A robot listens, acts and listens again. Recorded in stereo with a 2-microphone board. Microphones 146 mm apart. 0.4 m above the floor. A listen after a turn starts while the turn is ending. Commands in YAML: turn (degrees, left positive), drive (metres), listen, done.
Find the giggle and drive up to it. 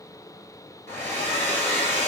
listen: true
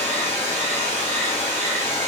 listen: true
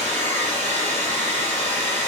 done: "I can't make out a giggle, only a hair dryer."